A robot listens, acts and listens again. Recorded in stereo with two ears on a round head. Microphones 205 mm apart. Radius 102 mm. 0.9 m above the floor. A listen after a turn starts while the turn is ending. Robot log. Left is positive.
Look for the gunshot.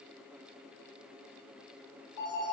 cmd idle
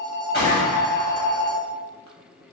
note: The gunshot: about 45° left or 135° left.
cmd yaw +45
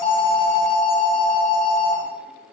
cmd idle
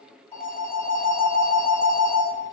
end: I heard a gunshot, but can't make it out now. It was about straight ahead or 90° left.